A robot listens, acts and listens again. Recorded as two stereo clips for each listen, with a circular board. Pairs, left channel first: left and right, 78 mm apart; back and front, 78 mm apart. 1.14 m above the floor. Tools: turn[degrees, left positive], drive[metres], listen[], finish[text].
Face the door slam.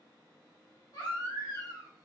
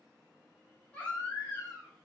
Action: listen[]
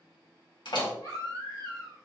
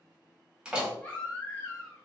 Thought: The door slam: 80° left.
Action: turn[80]
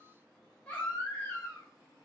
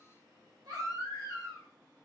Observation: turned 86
Thought: Nothing new. It was at 10° right.
Action: turn[-10]
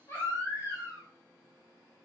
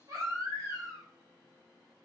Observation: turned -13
Action: finish[I heard a door slam from this way, but can't make it out now.]